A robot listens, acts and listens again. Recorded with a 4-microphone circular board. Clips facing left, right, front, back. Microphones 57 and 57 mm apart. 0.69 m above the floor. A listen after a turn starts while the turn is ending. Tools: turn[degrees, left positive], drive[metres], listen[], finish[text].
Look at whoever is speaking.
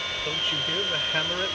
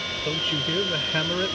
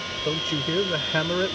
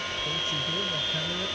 Action: finish[Found it: a man speaking, straight ahead.]